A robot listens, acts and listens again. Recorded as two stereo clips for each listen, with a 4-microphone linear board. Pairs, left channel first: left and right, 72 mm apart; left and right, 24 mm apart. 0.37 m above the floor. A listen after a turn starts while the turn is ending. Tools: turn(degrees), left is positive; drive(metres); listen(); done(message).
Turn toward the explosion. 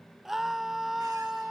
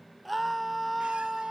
listen()
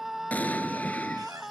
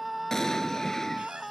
turn(degrees=20)
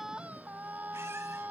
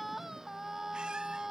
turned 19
listen()
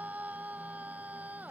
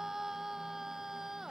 done("I heard an explosion, but can't make it out now. It was about straight ahead or 140° left.")